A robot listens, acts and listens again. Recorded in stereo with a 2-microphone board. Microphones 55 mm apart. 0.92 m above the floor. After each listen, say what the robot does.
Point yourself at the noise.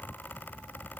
Keep listening.
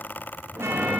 Turn 50° right.
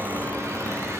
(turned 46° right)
Turn 75° right.
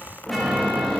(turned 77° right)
Found it: a chime, straight ahead, 1 to 2 m away.